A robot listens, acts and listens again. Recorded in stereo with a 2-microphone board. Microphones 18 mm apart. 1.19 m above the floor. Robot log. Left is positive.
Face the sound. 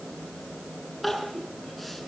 cmd yaw +30
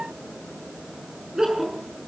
note: So it is at 35° right.
cmd yaw -35
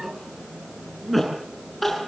end: Found it: crying, straight ahead, over 4 m away.